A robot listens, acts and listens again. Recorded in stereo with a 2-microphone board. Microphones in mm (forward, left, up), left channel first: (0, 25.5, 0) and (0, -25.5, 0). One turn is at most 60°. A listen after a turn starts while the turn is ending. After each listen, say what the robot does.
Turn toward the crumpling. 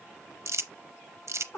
Turn 60° right.
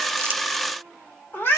Keep listening.
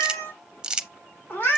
Turn 20° right.
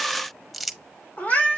Facing the crumpling, under 1 m away.